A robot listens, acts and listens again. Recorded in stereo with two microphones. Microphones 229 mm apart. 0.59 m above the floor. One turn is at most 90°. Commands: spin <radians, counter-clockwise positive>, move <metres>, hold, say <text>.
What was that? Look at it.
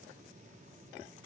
hold
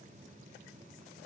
hold
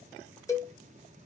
spin 0.52
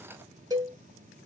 spin -0.26
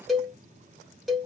say Found it: a cowbell, straight ahead, under 1 m away.